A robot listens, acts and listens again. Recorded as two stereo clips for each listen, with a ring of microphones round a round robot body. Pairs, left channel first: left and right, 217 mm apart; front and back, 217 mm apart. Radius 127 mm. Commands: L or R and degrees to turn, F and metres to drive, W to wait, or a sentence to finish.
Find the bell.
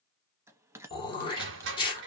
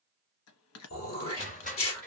R10
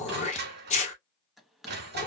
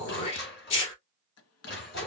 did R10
Found it: a bell, straight ahead.